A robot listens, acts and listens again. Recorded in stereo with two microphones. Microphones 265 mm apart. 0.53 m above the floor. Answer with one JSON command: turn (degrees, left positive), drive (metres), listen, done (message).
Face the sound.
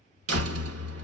{"turn": -60}
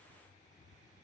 {"listen": true}
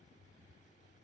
{"done": "I heard a door slam, but can't make it out now. It was about straight ahead or 60° right."}